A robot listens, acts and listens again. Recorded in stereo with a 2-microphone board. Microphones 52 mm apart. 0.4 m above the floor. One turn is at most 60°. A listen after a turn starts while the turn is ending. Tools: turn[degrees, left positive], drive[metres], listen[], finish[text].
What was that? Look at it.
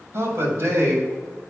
Thought: The man speaking: about 60° right or 120° right.
Action: turn[-60]
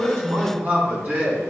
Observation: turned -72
Thought: So it is at 35° right.
Action: turn[-35]
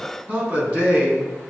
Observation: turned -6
Thought: The man speaking is now 30° right.
Action: turn[-30]
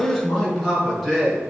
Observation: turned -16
Thought: The man speaking is now 15° right.
Action: turn[-15]
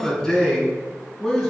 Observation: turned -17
Action: finish[Found it: a man speaking, straight ahead.]